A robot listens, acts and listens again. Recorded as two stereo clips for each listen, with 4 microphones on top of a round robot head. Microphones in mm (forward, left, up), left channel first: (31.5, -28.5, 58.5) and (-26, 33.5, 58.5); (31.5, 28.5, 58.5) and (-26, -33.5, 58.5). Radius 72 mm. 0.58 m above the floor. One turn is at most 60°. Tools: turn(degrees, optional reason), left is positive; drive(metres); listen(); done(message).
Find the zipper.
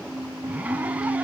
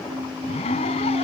turn(degrees=60, reason="The zipper: 60° left.")
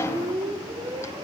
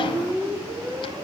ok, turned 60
listen()
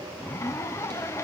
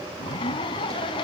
turn(degrees=15, reason="The zipper is now 15° left.")
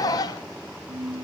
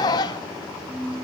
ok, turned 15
done("Facing the zipper.")